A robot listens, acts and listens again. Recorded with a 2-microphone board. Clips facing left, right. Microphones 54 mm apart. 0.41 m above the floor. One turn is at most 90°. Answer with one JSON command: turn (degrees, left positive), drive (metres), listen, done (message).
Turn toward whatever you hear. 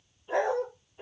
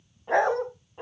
{"turn": -65}
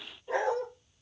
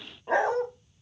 {"turn": -70}
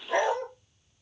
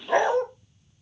{"turn": -45}
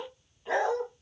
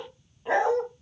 {"turn": -30}
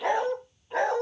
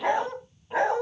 {"turn": -15}
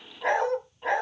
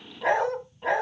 {"done": "Facing the dog barking, 1 to 2 m away."}